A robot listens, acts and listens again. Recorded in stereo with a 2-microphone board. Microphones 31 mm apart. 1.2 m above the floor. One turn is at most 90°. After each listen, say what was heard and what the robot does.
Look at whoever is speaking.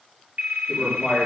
Turn 30° right.
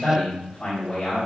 So it is at 30° left. Turn 30° left.
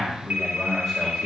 Found it: a man speaking, straight ahead, over 4 m away.